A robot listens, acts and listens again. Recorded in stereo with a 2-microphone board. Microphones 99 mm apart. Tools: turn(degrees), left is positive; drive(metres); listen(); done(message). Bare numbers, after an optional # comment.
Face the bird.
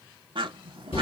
# The bird: about 65° right or 115° right.
turn(-65)
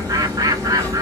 # So it is at 40° right.
turn(-40)
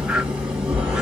listen()
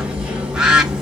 # The bird is now 10° right.
turn(-10)
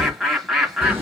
done("Found it: a bird, straight ahead, 1 to 2 m away.")